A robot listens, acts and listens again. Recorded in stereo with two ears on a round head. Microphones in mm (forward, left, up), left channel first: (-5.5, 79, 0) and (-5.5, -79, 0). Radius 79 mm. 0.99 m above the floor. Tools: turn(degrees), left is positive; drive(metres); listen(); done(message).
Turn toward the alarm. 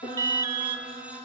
turn(degrees=-20)
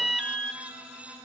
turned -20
done("Found it: an alarm, straight ahead, 2 to 4 m away.")